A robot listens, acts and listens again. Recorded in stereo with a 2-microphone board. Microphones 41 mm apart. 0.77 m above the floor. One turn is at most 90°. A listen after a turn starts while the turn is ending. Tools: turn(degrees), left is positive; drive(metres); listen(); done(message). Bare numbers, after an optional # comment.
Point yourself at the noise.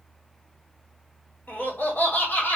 # The laughter: about 40° left or 140° left.
turn(40)
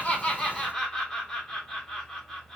done("Facing the laughter, 2 to 4 m away.")